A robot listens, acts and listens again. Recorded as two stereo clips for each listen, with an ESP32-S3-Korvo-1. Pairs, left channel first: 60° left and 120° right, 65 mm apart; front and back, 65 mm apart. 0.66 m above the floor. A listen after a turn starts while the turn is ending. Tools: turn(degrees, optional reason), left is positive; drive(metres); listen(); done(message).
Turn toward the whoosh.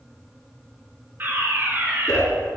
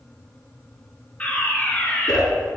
turn(degrees=20, reason="The whoosh: 20° left.")
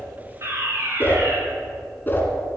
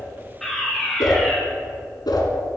done("Found it: a whoosh, straight ahead.")